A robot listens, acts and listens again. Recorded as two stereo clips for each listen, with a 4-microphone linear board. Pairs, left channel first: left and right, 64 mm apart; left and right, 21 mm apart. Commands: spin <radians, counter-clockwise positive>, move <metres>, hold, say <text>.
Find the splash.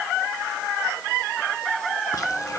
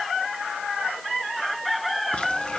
hold
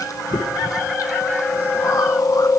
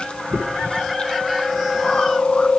hold
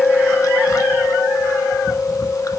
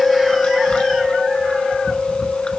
say I can't make out a splash to turn to.